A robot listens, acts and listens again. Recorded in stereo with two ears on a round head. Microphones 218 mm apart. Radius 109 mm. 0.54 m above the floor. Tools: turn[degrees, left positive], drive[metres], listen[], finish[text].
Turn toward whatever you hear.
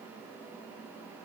Action: listen[]
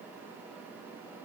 Action: listen[]
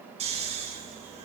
Thought: The snoring: about 30° right or 150° right.
Action: turn[-30]
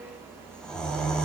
Action: finish[Facing the snoring, over 4 m away.]